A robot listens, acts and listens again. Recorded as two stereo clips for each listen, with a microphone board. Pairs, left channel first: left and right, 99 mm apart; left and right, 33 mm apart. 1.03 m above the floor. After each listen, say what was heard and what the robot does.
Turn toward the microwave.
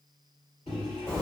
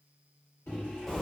Turn 90° left.
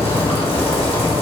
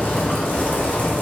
Keep listening.
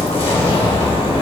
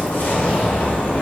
Keep listening.
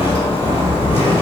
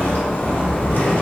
I heard a microwave from this way, but can't make it out now.